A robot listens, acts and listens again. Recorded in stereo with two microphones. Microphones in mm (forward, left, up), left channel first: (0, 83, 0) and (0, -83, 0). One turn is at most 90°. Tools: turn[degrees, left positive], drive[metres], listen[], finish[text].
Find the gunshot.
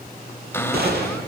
Action: turn[-90]
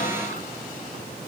Action: finish[Facing where the gunshot came from. I can't hear it now.]